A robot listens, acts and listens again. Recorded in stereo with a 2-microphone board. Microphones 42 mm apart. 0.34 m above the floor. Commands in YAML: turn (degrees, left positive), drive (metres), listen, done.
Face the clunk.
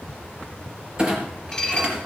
turn: -25
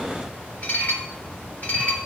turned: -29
listen: true
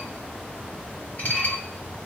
done: "I heard a clunk, but can't make it out now. It was about 5° left or 125° right."